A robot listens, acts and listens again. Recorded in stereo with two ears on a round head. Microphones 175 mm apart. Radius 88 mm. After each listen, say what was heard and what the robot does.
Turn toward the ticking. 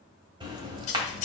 The ticking: about 25° right or 155° right. Turn 25° right.
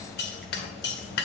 Found it: ticking, straight ahead, 1 to 2 m away.